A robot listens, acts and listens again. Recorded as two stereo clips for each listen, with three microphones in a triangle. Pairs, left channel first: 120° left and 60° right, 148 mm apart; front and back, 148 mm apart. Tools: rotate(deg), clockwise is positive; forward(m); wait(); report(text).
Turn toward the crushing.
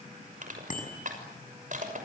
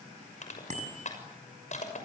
rotate(35)
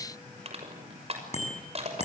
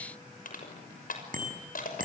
rotate(15)
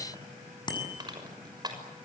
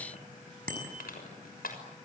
report("Facing the crushing.")